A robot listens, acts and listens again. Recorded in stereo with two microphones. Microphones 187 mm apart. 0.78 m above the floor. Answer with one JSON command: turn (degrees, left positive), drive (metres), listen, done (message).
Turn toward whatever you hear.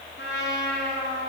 {"turn": 90}
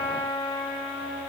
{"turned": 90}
{"done": "Found it: a trumpet, straight ahead, 2 to 4 m away."}